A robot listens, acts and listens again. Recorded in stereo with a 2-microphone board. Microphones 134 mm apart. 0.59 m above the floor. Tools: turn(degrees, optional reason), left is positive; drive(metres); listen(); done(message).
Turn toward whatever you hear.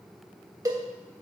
turn(degrees=-25, reason="The cowbell: about 25° right or 155° right.")
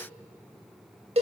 turn(degrees=-120, reason="So it is at 120° right.")
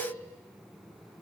listen()
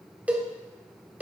turn(degrees=-10, reason="The cowbell is now 10° right.")
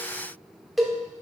done("Facing the cowbell.")